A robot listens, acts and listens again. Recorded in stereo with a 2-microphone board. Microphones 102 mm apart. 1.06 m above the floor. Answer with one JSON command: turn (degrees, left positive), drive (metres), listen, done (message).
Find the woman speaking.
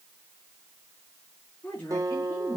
{"turn": 25}
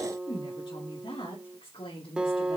{"turn": 115}
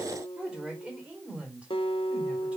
{"turn": -10}
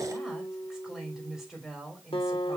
{"done": "Found it: a woman speaking, straight ahead, 2 to 4 m away."}